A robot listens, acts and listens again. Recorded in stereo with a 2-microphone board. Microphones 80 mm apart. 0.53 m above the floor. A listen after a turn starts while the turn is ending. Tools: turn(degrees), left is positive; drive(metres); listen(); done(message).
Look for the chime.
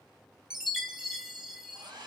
turn(degrees=-30)
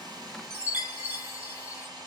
turn(degrees=-140)
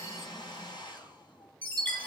turn(degrees=20)
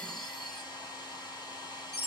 done("Found it: a chime, straight ahead, 1 to 2 m away.")